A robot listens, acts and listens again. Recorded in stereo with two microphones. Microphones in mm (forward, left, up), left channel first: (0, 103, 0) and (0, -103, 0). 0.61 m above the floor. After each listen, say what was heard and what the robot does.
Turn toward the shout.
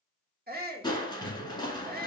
The shout: about 45° right or 135° right. Turn 45° right.
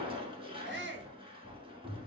So it is at 75° right. Turn 75° right.
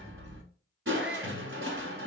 Keep listening.
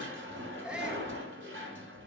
Found it: a shout, straight ahead.